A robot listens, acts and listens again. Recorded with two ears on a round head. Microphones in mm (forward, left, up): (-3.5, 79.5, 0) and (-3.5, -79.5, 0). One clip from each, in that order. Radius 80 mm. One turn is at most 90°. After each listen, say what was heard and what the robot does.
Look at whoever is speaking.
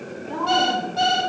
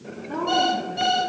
The woman speaking: about 55° left or 125° left. Turn 55° left.
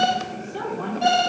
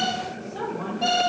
So it is at 80° left. Turn 80° left.
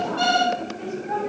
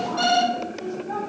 The woman speaking is now 15° left. Turn 15° left.
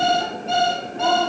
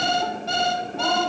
Keep listening.
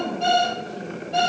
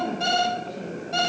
Keep listening.
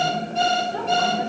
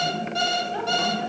I heard a woman speaking from this way, but can't make it out now.